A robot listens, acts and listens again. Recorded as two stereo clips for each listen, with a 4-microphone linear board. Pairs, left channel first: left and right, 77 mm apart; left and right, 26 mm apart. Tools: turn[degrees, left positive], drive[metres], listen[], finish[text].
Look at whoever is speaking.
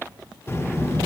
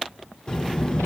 Thought: The child speaking: about 35° left or 145° left.
Action: turn[35]
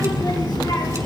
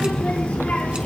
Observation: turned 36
Thought: So it is at 105° left.
Action: turn[105]
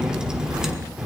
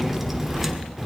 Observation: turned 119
Thought: The child speaking is now 10° right.
Action: turn[-10]
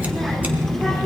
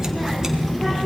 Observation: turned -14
Action: finish[Found it: a child speaking, straight ahead.]